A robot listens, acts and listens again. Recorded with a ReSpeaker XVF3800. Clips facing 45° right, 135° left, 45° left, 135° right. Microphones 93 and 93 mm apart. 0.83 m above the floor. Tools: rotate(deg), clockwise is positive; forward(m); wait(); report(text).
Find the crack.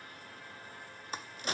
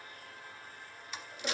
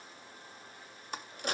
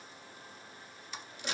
report("Found it: a crack, straight ahead, under 1 m away.")